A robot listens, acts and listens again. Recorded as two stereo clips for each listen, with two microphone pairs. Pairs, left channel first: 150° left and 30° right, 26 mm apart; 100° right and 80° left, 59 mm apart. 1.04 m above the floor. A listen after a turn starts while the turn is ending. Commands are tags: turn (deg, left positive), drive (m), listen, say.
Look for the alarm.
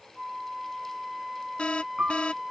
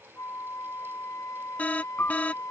<turn deg="-165"/>
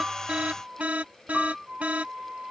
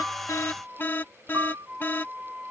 <turn deg="-50"/>
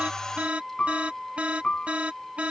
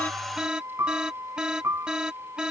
<say>Found it: an alarm, straight ahead.</say>